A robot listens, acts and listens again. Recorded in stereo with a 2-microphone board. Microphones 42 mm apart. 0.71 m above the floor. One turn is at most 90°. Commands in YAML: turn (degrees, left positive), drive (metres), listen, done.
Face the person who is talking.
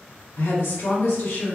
turn: 65
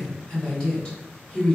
turn: 20
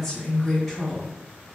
done: "Found it: a woman speaking, straight ahead."